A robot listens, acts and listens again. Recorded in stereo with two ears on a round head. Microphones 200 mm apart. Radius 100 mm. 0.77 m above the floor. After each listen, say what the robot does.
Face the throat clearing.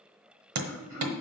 Turn 40° right.
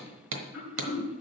Found it: throat clearing, straight ahead.